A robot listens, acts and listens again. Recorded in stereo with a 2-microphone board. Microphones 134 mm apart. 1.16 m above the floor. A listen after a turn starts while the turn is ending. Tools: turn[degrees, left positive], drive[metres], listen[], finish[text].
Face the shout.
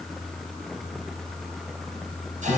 Action: listen[]
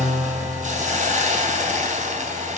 Action: listen[]
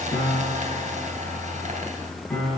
Action: finish[I can't make out a shout to turn to.]